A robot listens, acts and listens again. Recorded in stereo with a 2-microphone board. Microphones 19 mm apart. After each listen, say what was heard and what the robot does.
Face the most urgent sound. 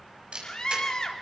The scream: about 45° left or 135° left. Turn 45° left.
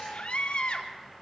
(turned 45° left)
So it is at 90° left. Turn 90° left.
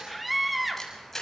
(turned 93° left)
Facing the scream, 2 to 4 m away.